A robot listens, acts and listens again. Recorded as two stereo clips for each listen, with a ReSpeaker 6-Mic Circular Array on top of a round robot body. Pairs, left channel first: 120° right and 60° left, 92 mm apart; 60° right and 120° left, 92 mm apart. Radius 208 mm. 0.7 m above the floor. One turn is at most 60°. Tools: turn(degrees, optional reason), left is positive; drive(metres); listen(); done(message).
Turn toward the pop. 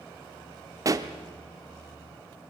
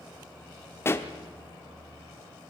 done("Facing the pop.")